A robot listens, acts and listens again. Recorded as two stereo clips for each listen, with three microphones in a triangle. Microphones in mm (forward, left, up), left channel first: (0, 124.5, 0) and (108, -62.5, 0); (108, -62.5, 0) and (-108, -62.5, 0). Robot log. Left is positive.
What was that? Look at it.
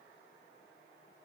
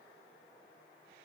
cmd idle
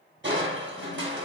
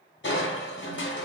note: The crushing: 30° right.
cmd yaw -30
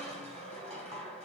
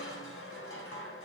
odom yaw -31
end: Facing the crushing, 1 to 2 m away.